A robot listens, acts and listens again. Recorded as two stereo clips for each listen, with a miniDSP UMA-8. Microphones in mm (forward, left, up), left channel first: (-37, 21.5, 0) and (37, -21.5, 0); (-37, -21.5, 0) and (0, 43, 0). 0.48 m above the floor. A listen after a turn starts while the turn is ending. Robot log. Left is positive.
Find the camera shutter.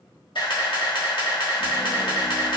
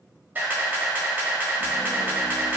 note: The camera shutter: 125° left.
cmd yaw +125
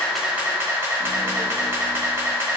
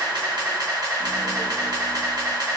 note: The camera shutter is now 30° left.
cmd yaw +30
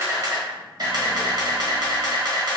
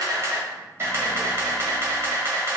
end: Facing the camera shutter, 1 to 2 m away.